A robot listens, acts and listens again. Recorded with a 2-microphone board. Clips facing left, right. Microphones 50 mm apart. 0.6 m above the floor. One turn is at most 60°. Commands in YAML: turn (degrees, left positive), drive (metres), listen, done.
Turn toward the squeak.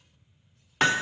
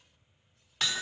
listen: true
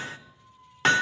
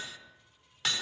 turn: 60
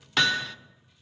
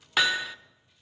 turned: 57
listen: true
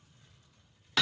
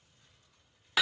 listen: true
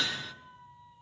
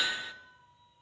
turn: 45
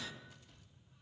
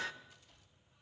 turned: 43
listen: true
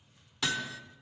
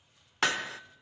listen: true
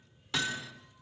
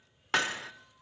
done: "Facing where the squeak came from. I can't hear it now."